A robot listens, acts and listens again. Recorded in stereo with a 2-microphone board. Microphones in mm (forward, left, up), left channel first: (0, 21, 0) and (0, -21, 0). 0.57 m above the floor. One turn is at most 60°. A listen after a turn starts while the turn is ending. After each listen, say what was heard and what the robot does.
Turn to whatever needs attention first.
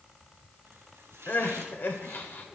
The crying: about 50° left or 130° left. Turn 50° left.
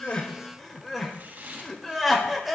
Found it: crying, straight ahead.